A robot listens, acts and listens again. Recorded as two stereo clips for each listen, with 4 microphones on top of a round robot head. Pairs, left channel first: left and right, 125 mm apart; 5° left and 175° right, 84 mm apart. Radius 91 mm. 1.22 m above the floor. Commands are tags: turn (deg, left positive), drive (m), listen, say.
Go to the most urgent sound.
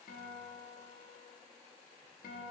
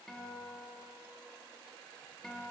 <listen/>
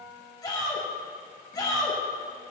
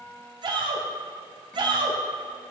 <turn deg="155"/>
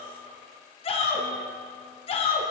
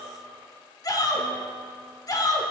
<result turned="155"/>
<turn deg="50"/>
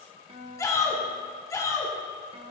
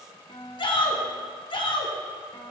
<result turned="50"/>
<turn deg="25"/>
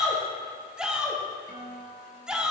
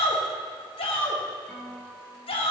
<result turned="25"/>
<drive m="1.0"/>
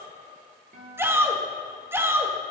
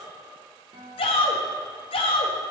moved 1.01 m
<turn deg="-20"/>
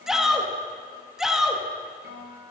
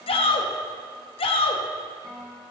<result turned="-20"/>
<drive m="1.0"/>
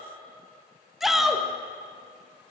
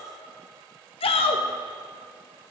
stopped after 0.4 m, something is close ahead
<say>I am next to the shout.</say>